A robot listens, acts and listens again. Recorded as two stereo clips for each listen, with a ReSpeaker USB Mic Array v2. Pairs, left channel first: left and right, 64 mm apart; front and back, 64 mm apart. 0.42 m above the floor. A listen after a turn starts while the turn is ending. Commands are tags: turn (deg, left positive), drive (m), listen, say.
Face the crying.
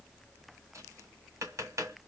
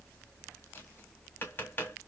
<listen/>
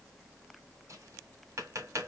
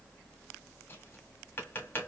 <listen/>
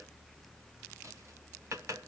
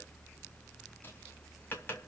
<say>I can't make out crying, only tapping.</say>